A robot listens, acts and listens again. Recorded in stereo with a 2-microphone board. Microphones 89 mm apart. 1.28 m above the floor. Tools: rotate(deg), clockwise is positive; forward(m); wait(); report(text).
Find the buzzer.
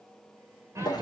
wait()
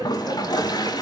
wait()
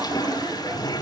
report("I can't make out a buzzer to turn to.")